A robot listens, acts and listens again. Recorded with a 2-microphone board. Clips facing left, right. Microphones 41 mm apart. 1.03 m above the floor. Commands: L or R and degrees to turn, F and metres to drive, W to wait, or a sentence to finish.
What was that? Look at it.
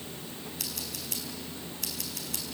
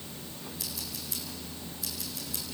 L70
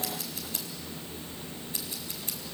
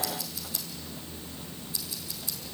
L40
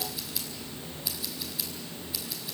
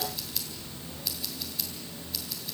Facing the scissors.